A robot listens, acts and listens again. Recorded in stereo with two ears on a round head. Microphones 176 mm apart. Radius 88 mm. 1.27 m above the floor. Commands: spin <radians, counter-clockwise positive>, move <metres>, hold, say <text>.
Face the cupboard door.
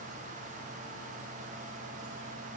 hold
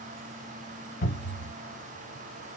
spin 0.70
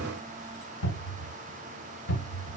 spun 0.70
spin 1.66
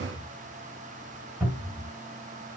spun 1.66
spin -0.17
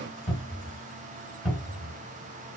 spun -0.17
say Facing the cupboard door.